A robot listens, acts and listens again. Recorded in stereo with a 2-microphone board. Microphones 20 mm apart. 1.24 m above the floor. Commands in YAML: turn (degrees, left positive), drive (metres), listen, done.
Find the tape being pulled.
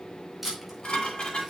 turn: -30
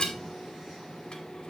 listen: true
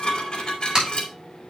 turn: -145
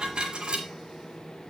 listen: true
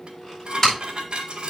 turn: 25
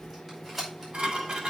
turn: -15
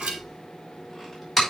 turn: -10
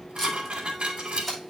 done: "Found it: tape being pulled, straight ahead, over 4 m away."